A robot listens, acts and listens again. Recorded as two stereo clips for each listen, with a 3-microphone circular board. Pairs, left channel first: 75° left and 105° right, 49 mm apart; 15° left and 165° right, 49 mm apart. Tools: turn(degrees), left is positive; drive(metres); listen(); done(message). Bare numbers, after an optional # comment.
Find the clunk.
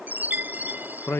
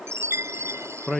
listen()
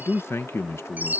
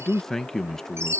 listen()
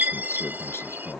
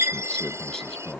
done("I can't make out a clunk, only a chime and a man speaking.")